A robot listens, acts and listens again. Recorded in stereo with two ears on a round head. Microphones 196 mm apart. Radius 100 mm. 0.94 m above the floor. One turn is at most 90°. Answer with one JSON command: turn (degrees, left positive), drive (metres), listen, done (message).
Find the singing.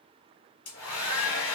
{"listen": true}
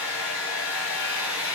{"listen": true}
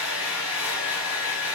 {"done": "I can't make out singing to turn to."}